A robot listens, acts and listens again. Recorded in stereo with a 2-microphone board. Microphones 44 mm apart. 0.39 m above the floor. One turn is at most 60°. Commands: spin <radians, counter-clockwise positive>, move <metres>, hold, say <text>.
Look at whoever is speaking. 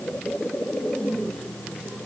hold
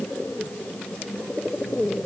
hold
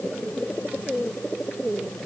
say I can't make out anyone speaking.